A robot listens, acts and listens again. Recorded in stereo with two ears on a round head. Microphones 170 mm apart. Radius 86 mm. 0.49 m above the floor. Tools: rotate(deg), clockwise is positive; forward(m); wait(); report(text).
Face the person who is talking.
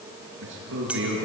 rotate(90)
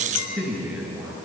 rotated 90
report("Facing the man speaking.")